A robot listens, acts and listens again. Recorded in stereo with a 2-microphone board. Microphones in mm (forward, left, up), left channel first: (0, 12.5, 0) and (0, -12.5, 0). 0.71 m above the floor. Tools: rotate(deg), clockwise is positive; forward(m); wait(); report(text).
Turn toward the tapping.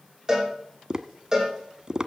rotate(30)
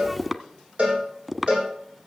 report("Facing the tapping.")